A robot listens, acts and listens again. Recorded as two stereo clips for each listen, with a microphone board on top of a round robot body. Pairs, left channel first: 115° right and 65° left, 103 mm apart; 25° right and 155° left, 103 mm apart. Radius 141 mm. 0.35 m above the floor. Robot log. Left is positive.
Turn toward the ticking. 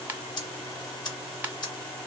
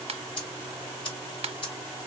note: The ticking: 60° right.
cmd yaw -60
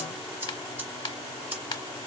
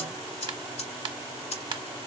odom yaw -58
end: Found it: ticking, straight ahead.